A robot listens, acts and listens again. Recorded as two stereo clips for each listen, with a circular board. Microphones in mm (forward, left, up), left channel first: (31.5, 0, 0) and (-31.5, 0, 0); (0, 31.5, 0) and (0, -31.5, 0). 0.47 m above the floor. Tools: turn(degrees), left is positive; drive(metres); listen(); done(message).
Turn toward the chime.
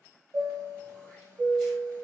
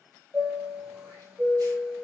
turn(degrees=-155)
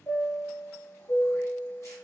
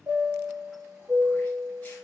turn(degrees=-40)
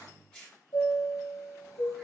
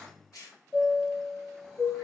done("Facing the chime.")